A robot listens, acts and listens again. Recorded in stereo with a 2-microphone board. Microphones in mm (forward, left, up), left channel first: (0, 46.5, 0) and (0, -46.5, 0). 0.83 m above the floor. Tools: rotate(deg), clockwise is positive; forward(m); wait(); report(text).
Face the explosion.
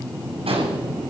rotate(90)
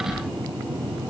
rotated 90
report("Facing where the explosion came from. I can't hear it now.")